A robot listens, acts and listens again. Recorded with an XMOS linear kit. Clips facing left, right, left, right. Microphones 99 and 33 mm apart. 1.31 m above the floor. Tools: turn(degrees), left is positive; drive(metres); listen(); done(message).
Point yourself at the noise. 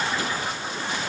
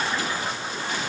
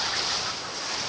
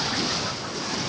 listen()
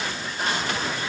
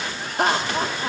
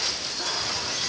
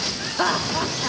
turn(degrees=-65)
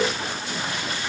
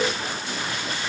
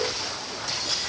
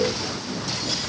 listen()
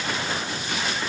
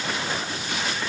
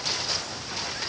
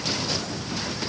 listen()
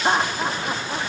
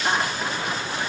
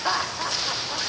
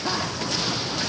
turn(degrees=30)
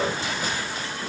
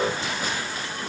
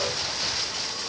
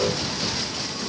listen()
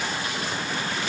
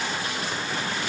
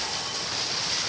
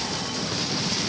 listen()
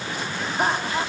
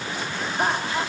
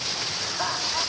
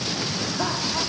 done("Facing the laughter.")